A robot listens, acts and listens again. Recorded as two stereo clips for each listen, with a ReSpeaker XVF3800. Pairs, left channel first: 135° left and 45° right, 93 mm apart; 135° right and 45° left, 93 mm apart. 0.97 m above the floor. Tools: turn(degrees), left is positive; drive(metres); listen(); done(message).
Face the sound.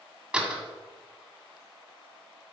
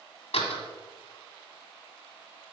turn(degrees=-125)
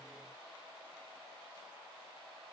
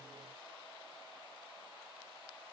done("Facing where the door slam came from. I can't hear it now.")